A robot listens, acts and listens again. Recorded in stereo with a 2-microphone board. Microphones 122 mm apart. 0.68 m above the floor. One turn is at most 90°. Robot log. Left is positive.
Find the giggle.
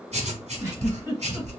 note: The giggle: about 20° right or 160° right.
cmd yaw -20
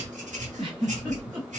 note: So it is at 140° right.
cmd yaw -90
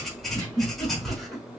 note: The giggle is now 35° right.
cmd yaw -35
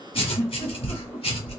cmd idle
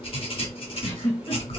note: The giggle is now 10° left.
cmd yaw +10
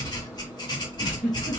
cmd idle
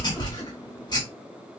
cmd idle
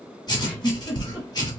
end: Found it: a giggle, straight ahead.